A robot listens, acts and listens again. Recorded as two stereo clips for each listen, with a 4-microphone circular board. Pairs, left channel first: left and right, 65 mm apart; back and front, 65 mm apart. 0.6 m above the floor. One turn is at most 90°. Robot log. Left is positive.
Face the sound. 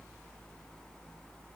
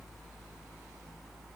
cmd idle
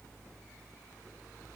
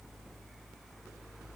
cmd idle
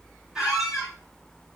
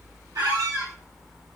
note: The squeak: 10° right.
cmd yaw -10
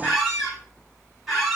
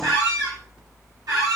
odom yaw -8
end: Facing the squeak, 2 to 4 m away.